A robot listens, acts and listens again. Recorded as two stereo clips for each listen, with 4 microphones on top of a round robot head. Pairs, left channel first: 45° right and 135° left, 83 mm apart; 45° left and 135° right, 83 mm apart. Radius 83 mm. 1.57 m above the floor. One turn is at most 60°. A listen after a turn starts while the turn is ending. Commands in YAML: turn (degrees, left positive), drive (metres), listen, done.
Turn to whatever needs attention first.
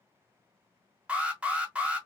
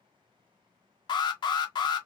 turn: 60
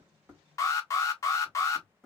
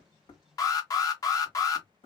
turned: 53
done: "Found it: an alarm, straight ahead."